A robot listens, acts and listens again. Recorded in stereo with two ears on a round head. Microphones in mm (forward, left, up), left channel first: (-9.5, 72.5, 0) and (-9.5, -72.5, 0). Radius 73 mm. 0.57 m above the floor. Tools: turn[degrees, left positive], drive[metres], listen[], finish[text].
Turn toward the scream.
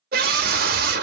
Thought: The scream: about 60° right or 120° right.
Action: turn[-60]
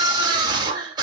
Thought: So it is at 30° right.
Action: turn[-30]
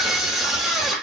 Action: finish[Found it: a scream, straight ahead.]